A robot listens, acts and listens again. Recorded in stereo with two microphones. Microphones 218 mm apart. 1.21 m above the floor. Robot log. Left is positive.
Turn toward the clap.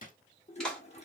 cmd yaw +30
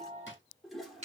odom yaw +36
note: So it is at 35° right.
cmd yaw -35
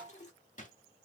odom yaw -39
cmd idle
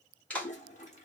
end: Facing the clap, 2 to 4 m away.